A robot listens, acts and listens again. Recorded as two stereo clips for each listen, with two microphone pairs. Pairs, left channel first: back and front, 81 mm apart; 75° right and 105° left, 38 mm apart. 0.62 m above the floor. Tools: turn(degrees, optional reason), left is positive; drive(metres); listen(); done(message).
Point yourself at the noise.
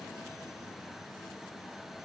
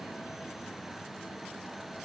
listen()
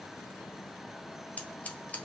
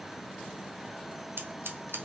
turn(degrees=105, reason="The scissors: 105° left.")
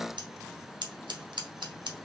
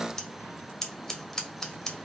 done("Facing the scissors, 1 to 2 m away.")